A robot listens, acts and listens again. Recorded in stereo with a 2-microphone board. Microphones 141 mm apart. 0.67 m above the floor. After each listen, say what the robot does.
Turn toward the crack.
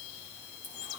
Keep listening.
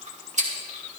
Keep listening.
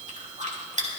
I can't make out a crack to turn to.